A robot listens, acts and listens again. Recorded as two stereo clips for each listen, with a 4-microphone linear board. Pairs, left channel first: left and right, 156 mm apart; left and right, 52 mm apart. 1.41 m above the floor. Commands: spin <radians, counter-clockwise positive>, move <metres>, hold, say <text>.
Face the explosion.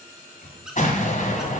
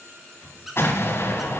spin 0.96
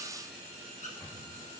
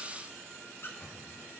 hold
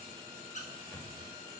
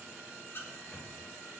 say I heard an explosion, but can't make it out now. It was about straight ahead or 70° left.